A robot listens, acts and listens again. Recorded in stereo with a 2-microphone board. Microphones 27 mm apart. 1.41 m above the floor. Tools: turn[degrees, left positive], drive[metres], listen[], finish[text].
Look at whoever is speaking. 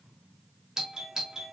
Action: listen[]
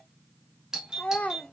Thought: The child speaking: about 70° left or 110° left.
Action: turn[70]
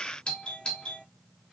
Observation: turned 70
Action: listen[]
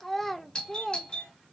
Thought: So it is at 10° left.
Action: turn[10]
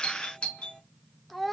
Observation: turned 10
Action: finish[Facing the child speaking.]